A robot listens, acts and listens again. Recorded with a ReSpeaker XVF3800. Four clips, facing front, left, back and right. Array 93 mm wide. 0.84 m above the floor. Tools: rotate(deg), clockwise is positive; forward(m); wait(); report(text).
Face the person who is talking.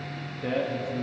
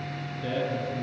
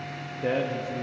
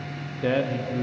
rotate(110)
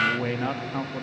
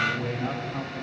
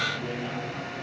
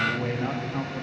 report("Found it: a man speaking, straight ahead, 1 to 2 m away.")